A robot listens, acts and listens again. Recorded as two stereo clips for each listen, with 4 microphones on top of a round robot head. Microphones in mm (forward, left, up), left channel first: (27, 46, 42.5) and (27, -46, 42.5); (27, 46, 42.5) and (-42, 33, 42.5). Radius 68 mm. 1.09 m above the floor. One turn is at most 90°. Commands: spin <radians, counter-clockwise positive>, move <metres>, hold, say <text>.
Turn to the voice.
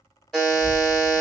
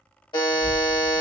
spin -1.57
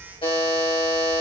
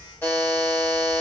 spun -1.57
spin -1.13
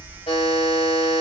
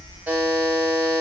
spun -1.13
spin -0.17
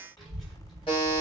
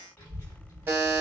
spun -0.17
say Facing the child speaking, 1 to 2 m away.